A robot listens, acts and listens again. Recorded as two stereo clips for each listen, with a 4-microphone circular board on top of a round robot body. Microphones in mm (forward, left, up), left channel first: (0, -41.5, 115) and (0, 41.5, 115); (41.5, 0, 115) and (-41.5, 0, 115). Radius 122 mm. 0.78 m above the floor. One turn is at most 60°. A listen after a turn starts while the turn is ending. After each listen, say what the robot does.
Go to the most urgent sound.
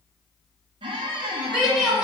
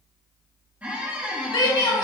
Turn 10° left.
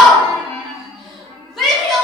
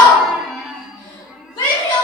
Drive 1.0 m forward.
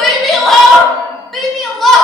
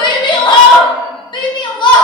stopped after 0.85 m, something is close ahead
Arrived at the shout, straight ahead.